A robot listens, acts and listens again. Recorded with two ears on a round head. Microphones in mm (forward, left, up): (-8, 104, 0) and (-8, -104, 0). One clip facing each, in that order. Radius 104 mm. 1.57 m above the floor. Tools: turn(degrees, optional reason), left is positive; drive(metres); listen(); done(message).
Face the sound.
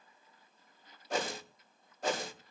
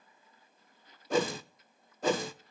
turn(degrees=-70, reason="The whoosh: about 70° right or 110° right.")
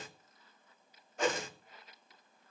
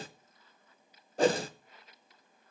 turn(degrees=-30, reason="So it is at 30° right.")
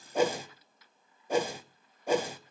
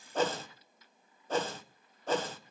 turn(degrees=10, reason="The whoosh is now 10° left.")
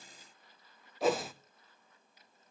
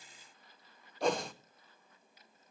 done("Facing the whoosh.")